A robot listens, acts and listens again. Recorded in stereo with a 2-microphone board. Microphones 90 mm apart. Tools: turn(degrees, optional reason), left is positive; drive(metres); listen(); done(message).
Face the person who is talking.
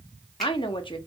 turn(degrees=70, reason="The woman speaking: about 70° left or 110° left.")
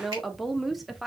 done("Facing the woman speaking.")